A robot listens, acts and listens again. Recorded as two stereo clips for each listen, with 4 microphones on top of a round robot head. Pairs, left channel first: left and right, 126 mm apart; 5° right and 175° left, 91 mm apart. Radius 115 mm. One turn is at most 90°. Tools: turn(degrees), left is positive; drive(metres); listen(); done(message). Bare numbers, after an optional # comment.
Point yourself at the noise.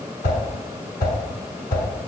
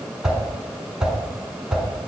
# The whoosh: 90° left.
turn(90)
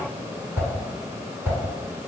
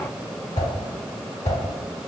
# The whoosh is now 10° right.
turn(-10)
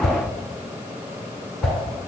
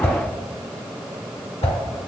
done("Found it: a whoosh, straight ahead, 1 to 2 m away.")